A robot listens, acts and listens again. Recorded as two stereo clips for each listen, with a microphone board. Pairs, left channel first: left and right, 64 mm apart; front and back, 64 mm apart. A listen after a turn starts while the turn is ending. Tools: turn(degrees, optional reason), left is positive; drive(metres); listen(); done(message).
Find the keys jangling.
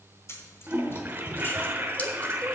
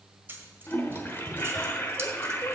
turn(degrees=125, reason="The keys jangling: 125° left.")
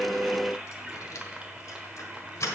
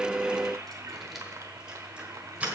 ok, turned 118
turn(degrees=115, reason="The keys jangling is now 115° left.")
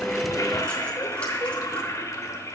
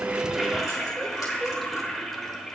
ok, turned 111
listen()
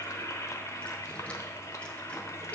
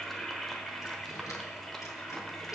turn(degrees=20, reason="The keys jangling is now 20° left.")
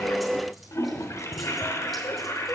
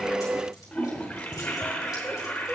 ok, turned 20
listen()
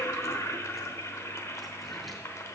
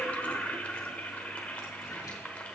listen()
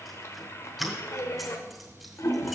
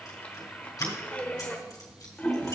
done("Found it: keys jangling, straight ahead.")